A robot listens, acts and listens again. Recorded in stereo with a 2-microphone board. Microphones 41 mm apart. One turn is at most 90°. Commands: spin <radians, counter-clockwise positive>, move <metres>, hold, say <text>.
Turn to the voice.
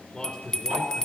spin 0.35
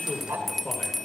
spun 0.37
spin 1.57
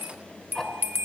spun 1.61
spin 0.79
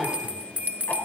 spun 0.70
hold
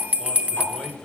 say Found it: a man speaking, straight ahead, over 4 m away.